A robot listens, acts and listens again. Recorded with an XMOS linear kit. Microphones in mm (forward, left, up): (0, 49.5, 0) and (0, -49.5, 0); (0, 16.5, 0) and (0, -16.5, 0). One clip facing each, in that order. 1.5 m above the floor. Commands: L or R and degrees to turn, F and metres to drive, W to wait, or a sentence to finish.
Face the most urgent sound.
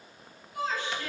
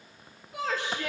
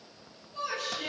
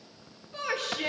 R90
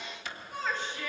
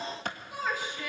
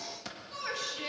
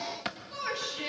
R10
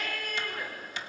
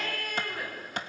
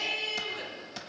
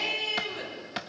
Facing the shout.